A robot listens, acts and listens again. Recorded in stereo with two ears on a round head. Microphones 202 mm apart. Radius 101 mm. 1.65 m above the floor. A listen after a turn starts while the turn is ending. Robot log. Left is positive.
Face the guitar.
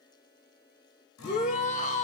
cmd yaw +90
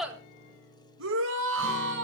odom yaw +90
end: Facing the guitar.